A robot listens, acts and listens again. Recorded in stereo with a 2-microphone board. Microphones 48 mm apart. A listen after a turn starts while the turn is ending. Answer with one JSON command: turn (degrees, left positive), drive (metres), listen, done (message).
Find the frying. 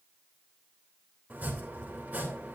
{"listen": true}
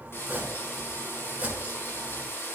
{"turn": 60}
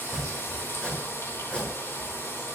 {"turn": 65}
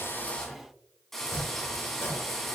{"done": "Found it: frying, straight ahead."}